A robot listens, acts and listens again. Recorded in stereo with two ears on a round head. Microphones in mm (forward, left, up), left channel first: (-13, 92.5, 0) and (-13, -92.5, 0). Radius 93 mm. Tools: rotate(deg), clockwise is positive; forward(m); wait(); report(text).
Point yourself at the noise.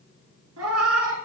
rotate(70)
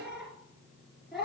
report("Facing the cat meowing, 2 to 4 m away.")